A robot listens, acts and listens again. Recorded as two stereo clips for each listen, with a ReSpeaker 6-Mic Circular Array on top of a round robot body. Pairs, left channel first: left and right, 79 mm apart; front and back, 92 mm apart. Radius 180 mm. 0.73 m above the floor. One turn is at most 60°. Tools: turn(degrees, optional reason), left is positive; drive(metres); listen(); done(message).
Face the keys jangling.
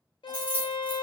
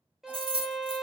turn(degrees=60, reason="The keys jangling: 165° left.")
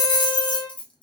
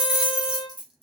turn(degrees=60, reason="The keys jangling is now 100° left.")
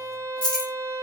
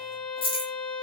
turn(degrees=10, reason="The keys jangling is now 10° left.")
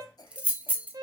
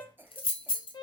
turn(degrees=-20, reason="The keys jangling is now 20° right.")
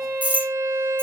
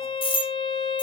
turn(degrees=-20, reason="The keys jangling is now 20° right.")
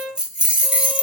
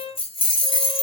turn(degrees=-15, reason="The keys jangling is now 15° right.")
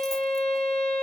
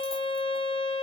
listen()
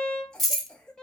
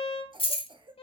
done("Facing the keys jangling.")